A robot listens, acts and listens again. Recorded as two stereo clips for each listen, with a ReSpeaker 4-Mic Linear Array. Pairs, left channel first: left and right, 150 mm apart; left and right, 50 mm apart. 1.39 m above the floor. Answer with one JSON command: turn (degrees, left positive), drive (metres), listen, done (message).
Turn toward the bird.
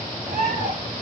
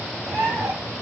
{"turn": -90}
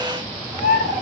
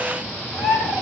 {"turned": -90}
{"turn": -10}
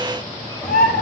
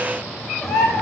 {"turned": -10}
{"done": "Facing the bird."}